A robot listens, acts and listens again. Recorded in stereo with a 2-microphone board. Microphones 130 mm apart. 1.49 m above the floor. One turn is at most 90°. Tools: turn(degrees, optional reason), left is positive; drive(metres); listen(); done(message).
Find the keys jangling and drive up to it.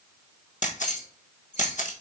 turn(degrees=65, reason="The keys jangling: about 65° left or 115° left.")
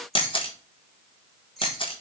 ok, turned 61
drive(metres=1.0)
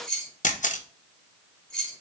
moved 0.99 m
drive(metres=1.0)
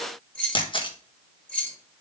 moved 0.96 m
turn(degrees=10, reason="The keys jangling is now 10° left.")
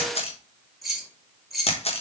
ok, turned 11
drive(metres=1.0)
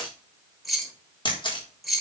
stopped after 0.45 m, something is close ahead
done("Arrived at the keys jangling, straight ahead.")